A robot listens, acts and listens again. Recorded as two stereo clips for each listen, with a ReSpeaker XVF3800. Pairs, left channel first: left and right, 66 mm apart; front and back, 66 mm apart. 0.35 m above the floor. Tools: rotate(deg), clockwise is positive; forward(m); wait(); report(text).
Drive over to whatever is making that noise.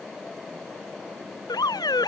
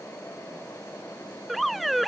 rotate(-85)
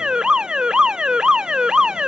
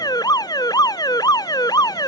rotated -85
rotate(10)
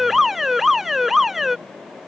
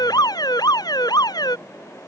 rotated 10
forward(1.0)
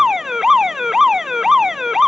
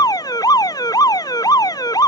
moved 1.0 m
forward(1.0)
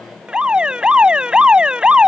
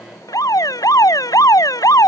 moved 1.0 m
rotate(15)
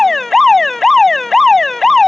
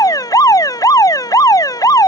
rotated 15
forward(1.0)
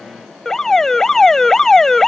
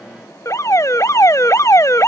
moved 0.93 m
rotate(-10)
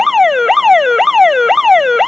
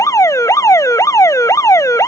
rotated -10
forward(1.0)
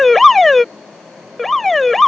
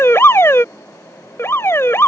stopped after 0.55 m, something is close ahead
report("Arrived at the alarm, straight ahead.")